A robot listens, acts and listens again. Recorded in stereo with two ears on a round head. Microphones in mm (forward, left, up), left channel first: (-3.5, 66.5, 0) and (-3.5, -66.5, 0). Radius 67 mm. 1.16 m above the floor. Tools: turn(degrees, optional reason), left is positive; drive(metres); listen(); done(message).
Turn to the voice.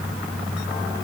listen()
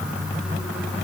listen()
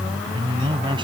turn(degrees=-35, reason="The man speaking: about 35° right or 145° right.")
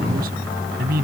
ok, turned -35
turn(degrees=-110, reason="So it is at 110° right.")
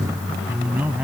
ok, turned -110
turn(degrees=-10, reason="The man speaking is now 10° right.")
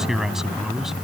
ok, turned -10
done("Facing the man speaking.")